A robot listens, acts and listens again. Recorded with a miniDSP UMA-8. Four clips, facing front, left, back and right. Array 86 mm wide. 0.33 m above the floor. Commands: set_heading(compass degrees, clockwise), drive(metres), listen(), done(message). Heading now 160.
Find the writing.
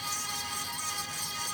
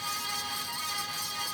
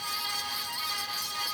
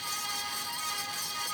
listen()
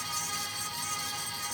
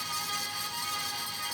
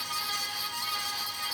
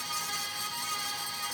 listen()
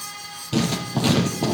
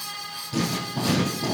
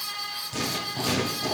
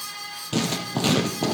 set_heading(215)
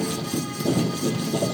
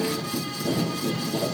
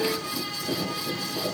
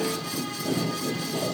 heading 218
done("Found it: writing, straight ahead, 2 to 4 m away.")